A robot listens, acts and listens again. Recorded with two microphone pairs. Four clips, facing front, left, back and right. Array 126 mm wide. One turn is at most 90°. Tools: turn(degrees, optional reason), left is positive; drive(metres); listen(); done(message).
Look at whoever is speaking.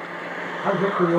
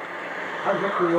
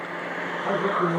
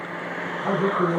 turn(degrees=15, reason="The man speaking: 15° left.")
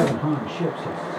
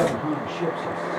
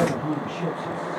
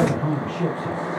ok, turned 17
done("Facing the man speaking, over 4 m away.")